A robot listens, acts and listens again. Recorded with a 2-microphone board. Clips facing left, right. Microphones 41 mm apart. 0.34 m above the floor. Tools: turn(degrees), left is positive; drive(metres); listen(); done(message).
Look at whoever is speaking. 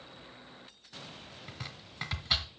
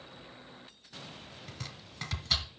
listen()
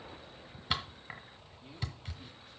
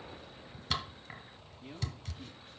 listen()
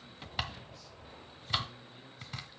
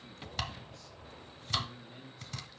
turn(degrees=-90)
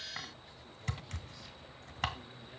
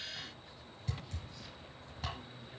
listen()
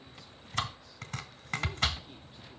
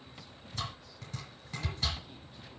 listen()
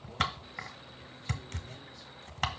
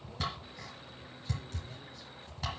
done("I heard a man speaking from this way, but can't make it out now.")